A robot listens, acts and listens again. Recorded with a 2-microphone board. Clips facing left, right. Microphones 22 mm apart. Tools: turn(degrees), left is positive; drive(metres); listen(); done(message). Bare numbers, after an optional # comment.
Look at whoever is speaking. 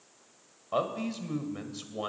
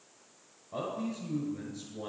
# The man speaking: about 60° left or 120° left.
turn(60)
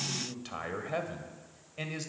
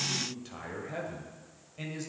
# So it is at 40° left.
turn(40)
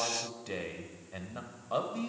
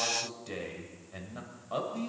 # The man speaking is now 15° left.
turn(15)
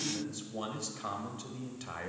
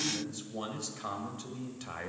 done("Found it: a man speaking, straight ahead.")